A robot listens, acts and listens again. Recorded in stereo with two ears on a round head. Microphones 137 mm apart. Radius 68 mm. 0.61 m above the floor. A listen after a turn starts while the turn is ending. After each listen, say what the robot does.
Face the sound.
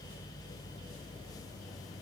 Keep listening.
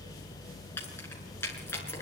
Turn 15° left.
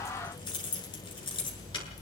Turn 35° left.
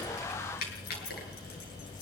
Turn 110° left.
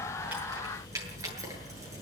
Turn 20° right.
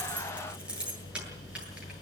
Facing the keys jangling.